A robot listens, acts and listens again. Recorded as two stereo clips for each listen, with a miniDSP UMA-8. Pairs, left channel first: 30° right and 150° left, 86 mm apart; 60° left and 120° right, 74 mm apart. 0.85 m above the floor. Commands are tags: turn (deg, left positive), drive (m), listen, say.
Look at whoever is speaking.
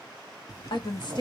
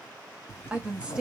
<turn deg="-45"/>
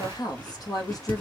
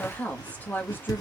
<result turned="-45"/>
<say>Facing the woman speaking, 1 to 2 m away.</say>